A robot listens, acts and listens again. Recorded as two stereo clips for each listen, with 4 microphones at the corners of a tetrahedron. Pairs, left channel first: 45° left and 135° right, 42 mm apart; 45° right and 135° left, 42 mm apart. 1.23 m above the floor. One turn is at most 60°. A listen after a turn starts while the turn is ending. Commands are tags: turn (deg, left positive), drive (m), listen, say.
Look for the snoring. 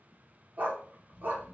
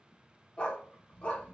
<turn deg="-60"/>
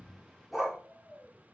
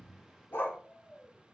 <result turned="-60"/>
<turn deg="-60"/>
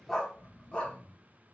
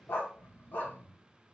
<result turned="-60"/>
<turn deg="-60"/>
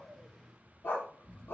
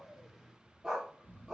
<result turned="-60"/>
<turn deg="-15"/>
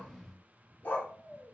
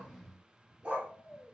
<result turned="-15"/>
<say>Facing the snoring, 1 to 2 m away.</say>